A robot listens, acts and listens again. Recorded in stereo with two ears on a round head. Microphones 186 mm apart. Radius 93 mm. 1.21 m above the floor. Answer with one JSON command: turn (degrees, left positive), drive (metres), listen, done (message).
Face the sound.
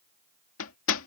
{"turn": 75}
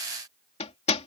{"turn": 30}
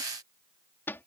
{"turn": 10}
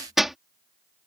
{"done": "Found it: hammering, straight ahead."}